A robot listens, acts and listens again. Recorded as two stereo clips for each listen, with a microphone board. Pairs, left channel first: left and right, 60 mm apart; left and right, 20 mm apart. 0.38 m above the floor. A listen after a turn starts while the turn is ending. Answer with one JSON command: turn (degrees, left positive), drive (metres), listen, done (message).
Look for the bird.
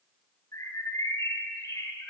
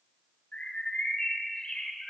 {"turn": 60}
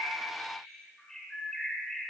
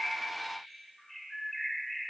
{"turn": 10}
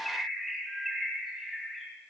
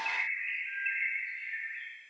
{"done": "Found it: a bird, straight ahead."}